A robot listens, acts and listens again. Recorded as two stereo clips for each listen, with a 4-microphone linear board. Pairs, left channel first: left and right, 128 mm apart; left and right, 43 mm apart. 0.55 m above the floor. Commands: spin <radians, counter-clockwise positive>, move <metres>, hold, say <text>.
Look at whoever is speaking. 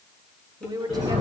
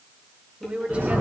spin -0.52
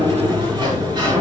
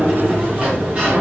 hold
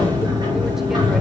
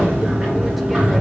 hold
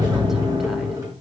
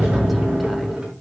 say I heard a woman speaking, but can't make it out now. It was about straight ahead or 120° right.